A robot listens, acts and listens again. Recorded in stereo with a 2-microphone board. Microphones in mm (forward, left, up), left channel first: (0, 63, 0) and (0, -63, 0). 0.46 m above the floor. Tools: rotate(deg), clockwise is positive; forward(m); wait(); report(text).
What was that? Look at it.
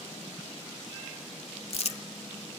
rotate(-55)
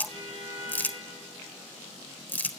rotate(-15)
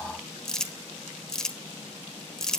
report("Facing the crumpling.")